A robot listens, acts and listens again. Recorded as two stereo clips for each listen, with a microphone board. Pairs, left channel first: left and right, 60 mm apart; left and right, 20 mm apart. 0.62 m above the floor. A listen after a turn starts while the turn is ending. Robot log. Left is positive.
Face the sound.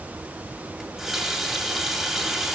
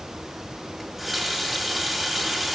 cmd yaw +30
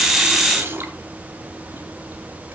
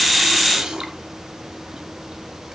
note: So it is at 35° right.
cmd yaw -35
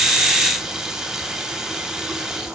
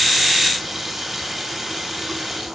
end: Found it: a running tap, straight ahead, 2 to 4 m away.